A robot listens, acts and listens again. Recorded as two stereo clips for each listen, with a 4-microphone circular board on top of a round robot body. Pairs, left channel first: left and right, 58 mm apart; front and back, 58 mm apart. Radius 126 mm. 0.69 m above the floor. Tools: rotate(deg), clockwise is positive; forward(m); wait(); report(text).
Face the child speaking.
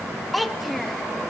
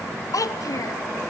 report("Found it: a child speaking, straight ahead.")